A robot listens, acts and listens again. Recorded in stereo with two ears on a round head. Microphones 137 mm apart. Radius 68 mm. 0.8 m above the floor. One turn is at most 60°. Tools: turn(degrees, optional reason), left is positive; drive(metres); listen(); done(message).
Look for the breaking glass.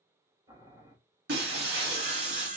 turn(degrees=-60)
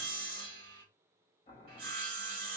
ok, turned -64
turn(degrees=-25, reason="Nothing new. It was at 25° right.")
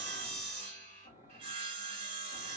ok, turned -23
done("Facing where the breaking glass came from. I can't hear it now.")